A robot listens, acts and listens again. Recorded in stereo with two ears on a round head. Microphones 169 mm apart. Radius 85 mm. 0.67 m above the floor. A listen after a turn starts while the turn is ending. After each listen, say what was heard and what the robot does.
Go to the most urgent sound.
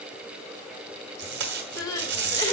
The crying: about 20° left or 160° left. Turn 20° left.
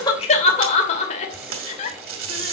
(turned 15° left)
So it is at 145° left. Turn 145° left.
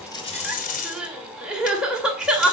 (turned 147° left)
Drive 1.0 m forward.
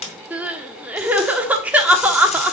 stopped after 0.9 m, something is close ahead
The crying is now 10° right. Turn 10° right.
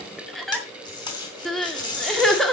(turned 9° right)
Arrived at the crying, straight ahead.